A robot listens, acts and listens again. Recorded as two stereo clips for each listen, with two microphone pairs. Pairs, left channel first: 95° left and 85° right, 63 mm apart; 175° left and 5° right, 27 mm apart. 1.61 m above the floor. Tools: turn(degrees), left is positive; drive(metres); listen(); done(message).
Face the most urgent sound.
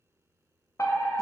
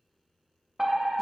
turn(degrees=70)
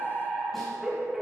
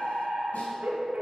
done("Facing the fire alarm.")